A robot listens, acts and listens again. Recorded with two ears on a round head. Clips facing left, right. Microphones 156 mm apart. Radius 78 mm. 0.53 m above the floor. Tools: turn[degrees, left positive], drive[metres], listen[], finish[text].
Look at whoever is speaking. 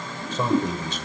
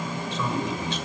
Thought: The man speaking: about 35° left or 145° left.
Action: turn[35]
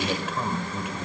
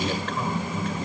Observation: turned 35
Thought: So it is at 10° left.
Action: turn[10]
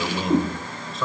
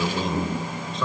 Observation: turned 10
Action: finish[Facing the man speaking.]